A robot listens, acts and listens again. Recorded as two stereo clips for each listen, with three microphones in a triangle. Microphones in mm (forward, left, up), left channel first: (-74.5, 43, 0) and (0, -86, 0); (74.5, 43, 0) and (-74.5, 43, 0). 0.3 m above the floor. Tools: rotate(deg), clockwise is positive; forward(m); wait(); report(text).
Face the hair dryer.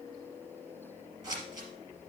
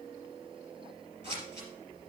wait()
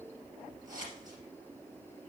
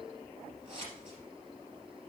wait()
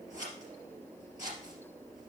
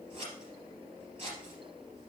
report("I can't make out a hair dryer to turn to.")